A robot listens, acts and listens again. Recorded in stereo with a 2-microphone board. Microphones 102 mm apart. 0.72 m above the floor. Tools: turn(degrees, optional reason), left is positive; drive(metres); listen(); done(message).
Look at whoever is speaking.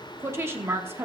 turn(degrees=-25, reason="The woman speaking: about 25° right or 155° right.")
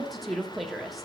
done("Facing the woman speaking, 1 to 2 m away.")